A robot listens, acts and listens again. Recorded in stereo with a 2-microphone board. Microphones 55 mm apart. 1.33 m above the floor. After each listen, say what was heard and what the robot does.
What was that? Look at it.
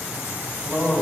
The man speaking: about 25° right or 155° right. Turn 25° right.
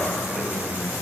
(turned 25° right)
Found it: a man speaking, straight ahead.